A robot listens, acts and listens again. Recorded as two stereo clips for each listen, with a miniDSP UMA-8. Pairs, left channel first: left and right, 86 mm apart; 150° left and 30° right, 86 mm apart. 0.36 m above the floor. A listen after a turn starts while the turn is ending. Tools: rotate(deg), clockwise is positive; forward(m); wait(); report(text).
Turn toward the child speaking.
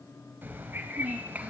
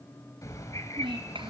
rotate(15)
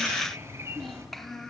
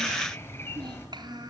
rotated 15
report("Found it: a child speaking, straight ahead.")